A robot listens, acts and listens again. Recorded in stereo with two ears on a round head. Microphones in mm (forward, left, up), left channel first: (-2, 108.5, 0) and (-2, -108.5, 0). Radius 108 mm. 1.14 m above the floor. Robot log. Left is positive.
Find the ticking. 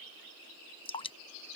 cmd idle
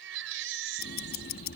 note: The ticking: about 40° left or 140° left.
cmd yaw +40
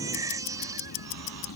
note: So it is at 95° left.
cmd yaw +95
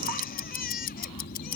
note: The ticking is now 40° left.
cmd yaw +40
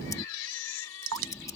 note: The ticking is now 15° left.
cmd yaw +15
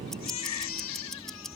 end: Found it: ticking, straight ahead.